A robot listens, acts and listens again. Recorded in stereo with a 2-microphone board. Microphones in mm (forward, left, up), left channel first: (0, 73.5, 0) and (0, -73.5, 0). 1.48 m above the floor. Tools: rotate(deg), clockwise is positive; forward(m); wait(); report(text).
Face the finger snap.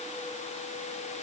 wait()
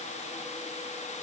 wait()
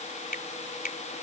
rotate(-90)
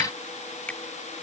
rotate(-10)
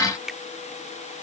report("Found it: a finger snap, straight ahead.")